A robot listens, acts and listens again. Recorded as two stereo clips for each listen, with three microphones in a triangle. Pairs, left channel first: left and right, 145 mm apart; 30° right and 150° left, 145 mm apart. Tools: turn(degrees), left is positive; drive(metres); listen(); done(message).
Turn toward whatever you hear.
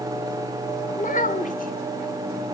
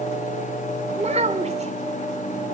turn(degrees=110)
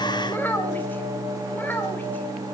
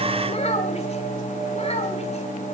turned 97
turn(degrees=15)
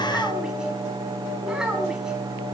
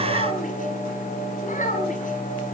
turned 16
done("Facing the child speaking, over 4 m away.")